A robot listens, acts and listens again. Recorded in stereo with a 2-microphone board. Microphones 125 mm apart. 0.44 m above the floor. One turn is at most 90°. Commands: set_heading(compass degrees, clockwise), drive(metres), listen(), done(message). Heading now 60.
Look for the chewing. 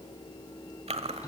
set_heading(120)
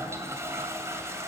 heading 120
listen()
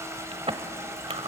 set_heading(175)
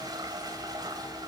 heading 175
listen()
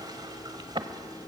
set_heading(220)
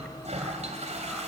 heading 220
listen()
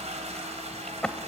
set_heading(210)
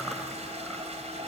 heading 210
listen()
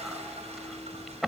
done("Facing the chewing, 1 to 2 m away.")